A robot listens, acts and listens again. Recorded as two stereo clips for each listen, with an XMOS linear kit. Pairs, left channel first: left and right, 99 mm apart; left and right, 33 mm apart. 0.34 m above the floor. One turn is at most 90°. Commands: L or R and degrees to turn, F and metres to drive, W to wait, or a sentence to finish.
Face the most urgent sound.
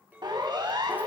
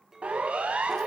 R50
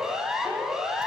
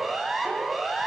Found it: a siren, straight ahead, 2 to 4 m away.